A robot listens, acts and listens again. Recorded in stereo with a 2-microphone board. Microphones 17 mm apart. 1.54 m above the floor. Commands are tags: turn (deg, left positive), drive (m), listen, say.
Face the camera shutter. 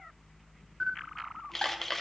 <turn deg="30"/>
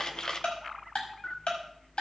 <turn deg="140"/>
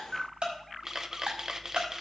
<turn deg="-30"/>
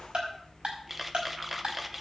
<say>Facing the camera shutter, under 1 m away.</say>